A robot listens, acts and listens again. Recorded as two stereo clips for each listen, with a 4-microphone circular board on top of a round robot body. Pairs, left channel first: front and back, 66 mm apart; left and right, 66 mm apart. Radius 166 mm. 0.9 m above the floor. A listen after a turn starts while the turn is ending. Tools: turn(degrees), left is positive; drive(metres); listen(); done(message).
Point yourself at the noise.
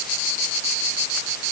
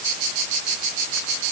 listen()
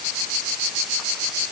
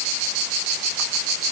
listen()
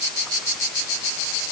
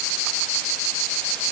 done("I can't make out anything.")